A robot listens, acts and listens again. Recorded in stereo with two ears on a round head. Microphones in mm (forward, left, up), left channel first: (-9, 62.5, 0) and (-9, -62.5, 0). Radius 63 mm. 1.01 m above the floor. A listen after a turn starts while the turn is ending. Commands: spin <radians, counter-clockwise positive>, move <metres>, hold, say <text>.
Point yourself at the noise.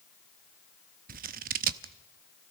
spin -1.13
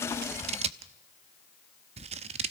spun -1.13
spin -0.79
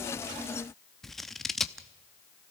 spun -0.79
say Facing the scissors.